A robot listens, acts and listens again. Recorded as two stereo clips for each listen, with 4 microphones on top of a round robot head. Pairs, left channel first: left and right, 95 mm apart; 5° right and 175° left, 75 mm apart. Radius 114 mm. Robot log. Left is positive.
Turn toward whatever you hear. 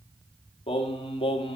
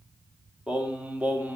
note: The singing: 105° left.
cmd yaw +105
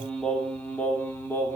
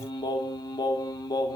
note: The singing is now 25° left.
cmd yaw +25
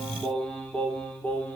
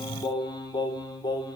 note: The singing is now 15° left.
cmd yaw +15
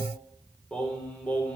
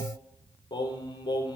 note: The singing is now 15° left.
cmd yaw +15
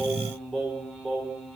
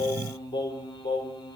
end: Facing the singing, 2 to 4 m away.